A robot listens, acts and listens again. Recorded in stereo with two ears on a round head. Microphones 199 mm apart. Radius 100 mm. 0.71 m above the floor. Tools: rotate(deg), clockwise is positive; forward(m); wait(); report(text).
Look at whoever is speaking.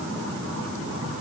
wait()
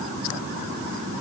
wait()
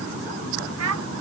rotate(75)
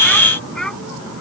report("Found it: a child speaking, straight ahead.")